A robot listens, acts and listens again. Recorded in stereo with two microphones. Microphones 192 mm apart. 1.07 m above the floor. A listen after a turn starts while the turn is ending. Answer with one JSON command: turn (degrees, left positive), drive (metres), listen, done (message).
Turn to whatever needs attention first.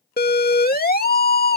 {"turn": 55}
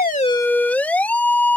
{"turn": 10}
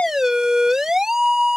{"done": "Found it: a siren, straight ahead."}